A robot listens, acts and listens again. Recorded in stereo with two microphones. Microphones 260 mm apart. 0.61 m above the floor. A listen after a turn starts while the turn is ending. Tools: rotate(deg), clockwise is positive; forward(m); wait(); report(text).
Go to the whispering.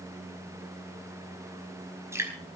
wait()
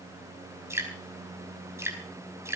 wait()
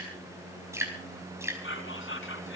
rotate(-50)
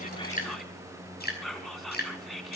forward(1.0)
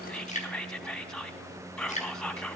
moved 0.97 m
forward(1.0)
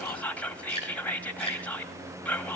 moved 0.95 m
forward(1.0)
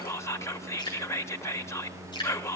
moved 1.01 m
rotate(-10)
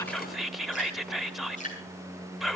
forward(1.0)
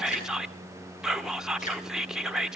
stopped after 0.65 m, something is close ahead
report("Arrived at the whispering, straight ahead.")